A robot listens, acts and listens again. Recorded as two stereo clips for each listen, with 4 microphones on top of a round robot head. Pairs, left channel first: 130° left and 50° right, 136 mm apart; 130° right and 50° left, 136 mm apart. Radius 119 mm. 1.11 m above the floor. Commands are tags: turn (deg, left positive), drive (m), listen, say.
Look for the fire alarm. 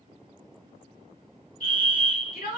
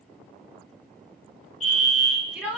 <turn deg="-160"/>
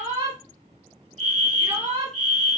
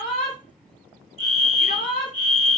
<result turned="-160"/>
<turn deg="-40"/>
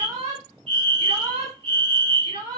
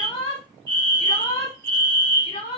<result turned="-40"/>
<turn deg="-20"/>
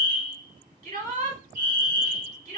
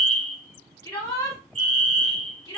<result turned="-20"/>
<say>Found it: a fire alarm, straight ahead, 2 to 4 m away.</say>